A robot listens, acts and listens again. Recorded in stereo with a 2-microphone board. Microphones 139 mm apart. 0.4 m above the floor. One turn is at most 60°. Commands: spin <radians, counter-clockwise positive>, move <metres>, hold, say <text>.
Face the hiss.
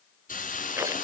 spin 1.05
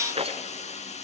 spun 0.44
spin 0.96
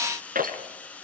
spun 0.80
spin 0.17
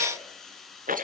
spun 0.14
say Facing the hiss, 2 to 4 m away.